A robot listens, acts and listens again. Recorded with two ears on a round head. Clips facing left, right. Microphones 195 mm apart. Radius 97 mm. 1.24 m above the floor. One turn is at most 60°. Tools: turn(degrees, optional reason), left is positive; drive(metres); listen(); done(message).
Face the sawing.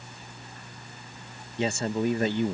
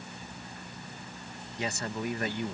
listen()
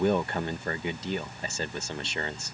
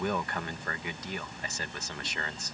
listen()
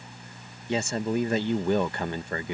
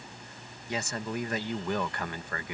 done("I can't make out sawing, only a man speaking.")